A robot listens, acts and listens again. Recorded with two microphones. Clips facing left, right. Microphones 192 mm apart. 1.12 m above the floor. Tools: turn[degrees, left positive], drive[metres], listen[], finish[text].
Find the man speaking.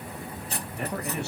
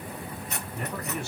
Thought: The man speaking: about 65° left or 115° left.
Action: turn[65]
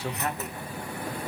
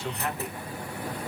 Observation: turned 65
Thought: So it is at 35° left.
Action: turn[35]
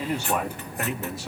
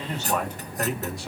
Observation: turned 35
Action: finish[Found it: a man speaking, straight ahead.]